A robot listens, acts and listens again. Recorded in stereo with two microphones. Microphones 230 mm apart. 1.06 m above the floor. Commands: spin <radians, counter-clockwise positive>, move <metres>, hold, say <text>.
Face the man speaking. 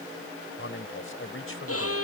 spin 1.13
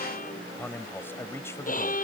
spin 0.17
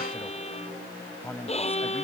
spin 0.17
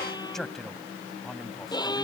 say Found it: a man speaking, straight ahead.